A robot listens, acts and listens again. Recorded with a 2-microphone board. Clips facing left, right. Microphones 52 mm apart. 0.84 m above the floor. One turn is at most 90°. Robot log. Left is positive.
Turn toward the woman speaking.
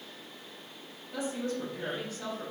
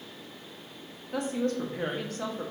note: The woman speaking: about 65° right or 115° right.
cmd yaw -65
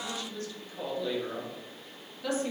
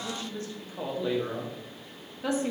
note: So it is at 30° right.
cmd yaw -30
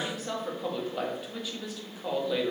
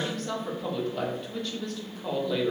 note: The woman speaking is now 10° left.
cmd yaw +10
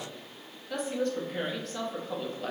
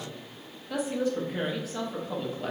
end: Found it: a woman speaking, straight ahead, under 1 m away.